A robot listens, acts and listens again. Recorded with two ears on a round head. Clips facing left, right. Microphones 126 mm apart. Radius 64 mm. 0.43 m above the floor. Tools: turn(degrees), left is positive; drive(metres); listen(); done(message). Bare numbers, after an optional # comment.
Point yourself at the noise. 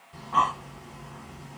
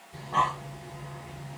# The breathing: about 40° right or 140° right.
turn(-40)
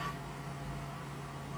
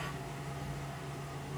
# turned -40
# So it is at 95° right.
turn(-95)
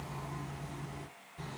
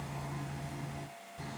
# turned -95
# The breathing is now 10° right.
turn(-10)
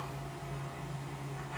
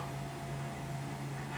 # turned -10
done("Found it: breathing, straight ahead.")